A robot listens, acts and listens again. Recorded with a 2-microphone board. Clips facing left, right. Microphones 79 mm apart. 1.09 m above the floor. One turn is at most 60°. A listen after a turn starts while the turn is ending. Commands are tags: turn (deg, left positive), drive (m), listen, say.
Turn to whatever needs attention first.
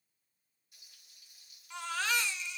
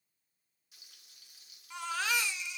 <turn deg="-30"/>
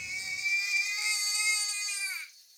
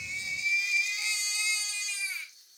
<turn deg="20"/>
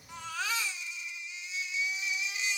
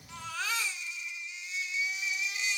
<say>Facing the baby crying.</say>